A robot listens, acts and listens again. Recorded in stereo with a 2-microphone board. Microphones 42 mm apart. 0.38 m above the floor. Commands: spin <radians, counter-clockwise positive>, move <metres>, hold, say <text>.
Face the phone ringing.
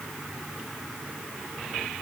hold
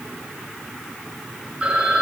spin -0.52
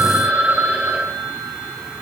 spin -2.09
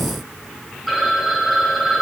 say Facing the phone ringing, 2 to 4 m away.